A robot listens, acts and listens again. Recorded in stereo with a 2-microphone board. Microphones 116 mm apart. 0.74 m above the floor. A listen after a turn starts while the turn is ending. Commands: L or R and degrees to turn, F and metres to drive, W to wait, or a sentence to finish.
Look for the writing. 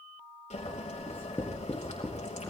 L25
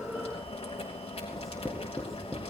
Found it: writing, straight ahead, 2 to 4 m away.